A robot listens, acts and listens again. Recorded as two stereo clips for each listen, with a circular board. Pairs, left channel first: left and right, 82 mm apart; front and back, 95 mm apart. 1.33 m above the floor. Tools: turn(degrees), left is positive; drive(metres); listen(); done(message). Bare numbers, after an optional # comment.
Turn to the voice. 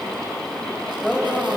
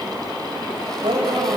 # The woman speaking: 175° left.
turn(175)
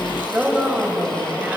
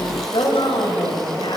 # The woman speaking is now 15° right.
turn(-15)
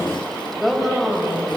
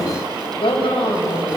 done("Facing the woman speaking.")